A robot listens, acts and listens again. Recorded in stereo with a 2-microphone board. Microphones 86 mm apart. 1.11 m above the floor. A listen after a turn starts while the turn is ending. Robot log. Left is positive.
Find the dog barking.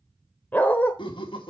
note: The dog barking: about 20° left or 160° left.
cmd yaw +20
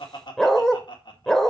end: Facing the dog barking.